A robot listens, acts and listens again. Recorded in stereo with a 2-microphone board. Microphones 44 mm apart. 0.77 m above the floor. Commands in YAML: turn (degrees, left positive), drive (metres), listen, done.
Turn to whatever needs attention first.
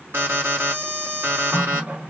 turn: -60
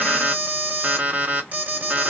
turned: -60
turn: -35
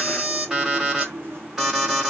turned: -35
turn: -15
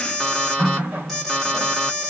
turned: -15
done: "Facing the alarm, 1 to 2 m away."